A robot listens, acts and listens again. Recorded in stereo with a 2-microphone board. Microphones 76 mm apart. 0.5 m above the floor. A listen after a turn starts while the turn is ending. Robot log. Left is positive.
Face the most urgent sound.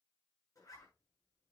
cmd idle
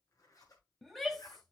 cmd yaw +30
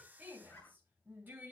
note: So it is at 25° right.
cmd yaw -25
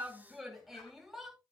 end: Facing the shout.